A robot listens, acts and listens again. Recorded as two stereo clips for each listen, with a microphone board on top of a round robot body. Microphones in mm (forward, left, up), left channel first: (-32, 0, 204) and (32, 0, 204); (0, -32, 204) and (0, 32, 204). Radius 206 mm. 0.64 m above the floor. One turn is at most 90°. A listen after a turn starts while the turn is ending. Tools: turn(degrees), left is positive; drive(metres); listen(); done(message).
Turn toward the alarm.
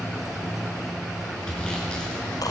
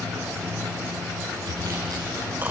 listen()
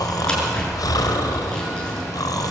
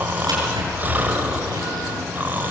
listen()
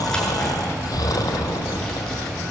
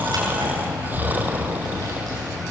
done("I can't make out an alarm, only snoring and sawing.")